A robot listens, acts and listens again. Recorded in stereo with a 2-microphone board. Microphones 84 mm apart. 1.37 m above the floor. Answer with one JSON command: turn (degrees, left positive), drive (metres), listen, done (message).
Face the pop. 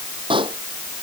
{"turn": -90}
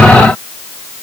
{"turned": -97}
{"done": "I heard a pop from this way, but can't make it out now."}